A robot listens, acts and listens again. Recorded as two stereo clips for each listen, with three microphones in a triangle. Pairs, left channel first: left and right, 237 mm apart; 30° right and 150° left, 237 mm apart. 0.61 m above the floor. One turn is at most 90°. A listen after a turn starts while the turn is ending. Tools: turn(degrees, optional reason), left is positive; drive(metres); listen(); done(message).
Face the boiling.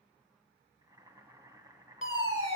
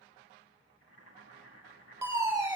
turn(degrees=-15, reason="The boiling: 15° right.")
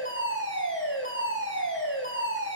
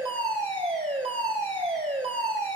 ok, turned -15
listen()
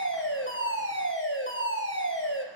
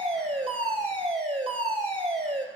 listen()
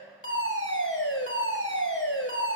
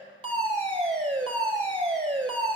done("Facing where the boiling came from. I can't hear it now.")